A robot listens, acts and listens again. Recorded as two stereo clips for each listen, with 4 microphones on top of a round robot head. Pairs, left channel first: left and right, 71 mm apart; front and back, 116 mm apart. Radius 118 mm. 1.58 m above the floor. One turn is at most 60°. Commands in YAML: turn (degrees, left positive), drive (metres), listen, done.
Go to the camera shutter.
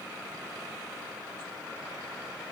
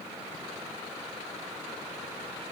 listen: true
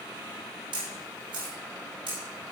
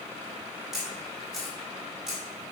turn: -60
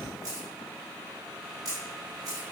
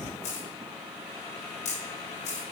turn: -40
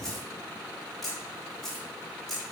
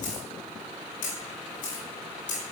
drive: 1.0
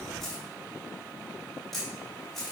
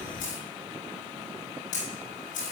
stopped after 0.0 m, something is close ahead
done: "Blocked. The camera shutter is further on, straight ahead."